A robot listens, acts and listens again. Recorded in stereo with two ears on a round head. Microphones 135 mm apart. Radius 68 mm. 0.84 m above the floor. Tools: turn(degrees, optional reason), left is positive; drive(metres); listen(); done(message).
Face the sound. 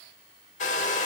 turn(degrees=50, reason="The hair dryer: about 50° left or 130° left.")
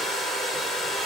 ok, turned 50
done("Facing the hair dryer, 1 to 2 m away.")